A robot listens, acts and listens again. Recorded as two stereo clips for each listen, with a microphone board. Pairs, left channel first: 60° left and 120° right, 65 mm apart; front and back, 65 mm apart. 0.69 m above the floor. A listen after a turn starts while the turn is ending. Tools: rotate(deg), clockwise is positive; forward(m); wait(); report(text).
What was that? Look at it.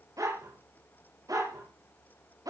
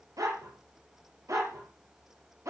rotate(140)
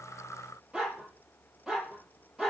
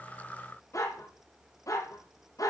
rotate(35)
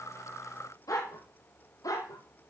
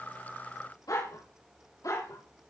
rotate(-30)
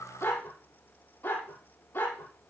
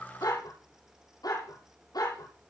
report("Found it: a dog barking, straight ahead.")